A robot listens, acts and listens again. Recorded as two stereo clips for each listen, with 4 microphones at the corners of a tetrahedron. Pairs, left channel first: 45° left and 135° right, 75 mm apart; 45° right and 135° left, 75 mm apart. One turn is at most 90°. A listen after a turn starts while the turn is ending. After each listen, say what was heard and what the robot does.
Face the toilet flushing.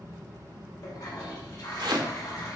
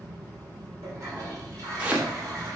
The toilet flushing: 90° left. Turn 90° left.
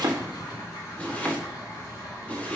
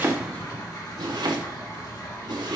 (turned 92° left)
Facing the toilet flushing.